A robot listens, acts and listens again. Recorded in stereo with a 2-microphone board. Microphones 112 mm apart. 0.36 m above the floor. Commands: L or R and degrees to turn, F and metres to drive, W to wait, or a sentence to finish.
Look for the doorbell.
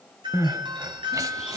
R45
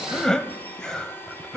W
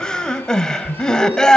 W
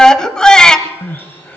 I heard a doorbell, but can't make it out now. It was about straight ahead or 90° right.